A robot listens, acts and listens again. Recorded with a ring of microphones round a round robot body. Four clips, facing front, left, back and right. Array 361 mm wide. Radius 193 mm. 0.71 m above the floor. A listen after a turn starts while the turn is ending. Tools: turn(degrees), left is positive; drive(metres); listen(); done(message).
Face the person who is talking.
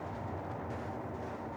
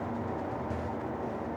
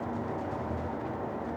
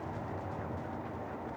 listen()
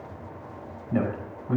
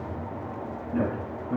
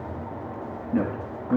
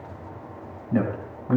turn(degrees=-50)
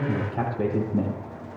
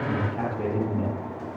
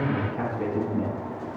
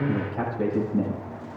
done("Facing the man speaking, over 4 m away.")